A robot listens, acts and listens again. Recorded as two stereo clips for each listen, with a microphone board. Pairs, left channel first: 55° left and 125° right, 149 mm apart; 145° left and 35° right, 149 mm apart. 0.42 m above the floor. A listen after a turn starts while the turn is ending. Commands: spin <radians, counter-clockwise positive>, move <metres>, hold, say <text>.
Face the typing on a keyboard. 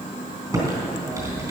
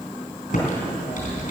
spin 2.97
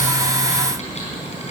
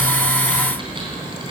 spin 0.35
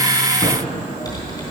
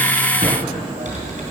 say Facing the typing on a keyboard.